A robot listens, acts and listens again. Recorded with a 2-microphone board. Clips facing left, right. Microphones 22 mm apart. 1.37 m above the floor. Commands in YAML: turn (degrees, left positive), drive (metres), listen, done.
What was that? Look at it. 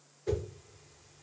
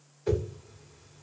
turn: -60
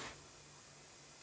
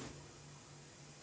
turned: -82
listen: true
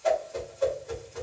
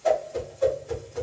turn: 20
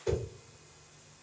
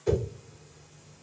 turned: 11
turn: 10
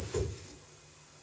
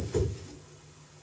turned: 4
done: "Facing the whoosh."